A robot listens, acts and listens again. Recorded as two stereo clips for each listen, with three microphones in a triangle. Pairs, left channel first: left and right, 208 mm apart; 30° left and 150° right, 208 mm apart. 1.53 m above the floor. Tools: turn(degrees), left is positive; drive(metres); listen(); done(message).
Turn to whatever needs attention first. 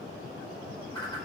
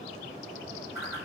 listen()
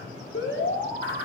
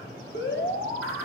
turn(degrees=65)
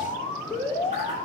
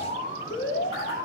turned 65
turn(degrees=10)
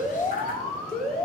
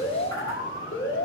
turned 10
done("Found it: an alarm, straight ahead, 1 to 2 m away.")